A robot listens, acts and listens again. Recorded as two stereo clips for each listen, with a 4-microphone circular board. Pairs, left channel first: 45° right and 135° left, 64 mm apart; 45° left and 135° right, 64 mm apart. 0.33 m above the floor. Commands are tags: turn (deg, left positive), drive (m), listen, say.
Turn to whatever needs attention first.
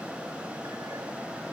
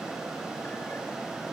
<listen/>
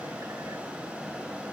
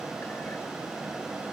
<listen/>
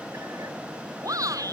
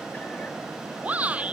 <turn deg="160"/>
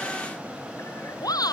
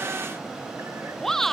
<turn deg="-35"/>
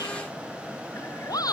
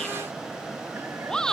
<turn deg="-35"/>
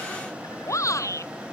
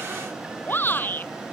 <turn deg="-10"/>
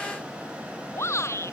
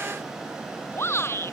<say>Facing the shout.</say>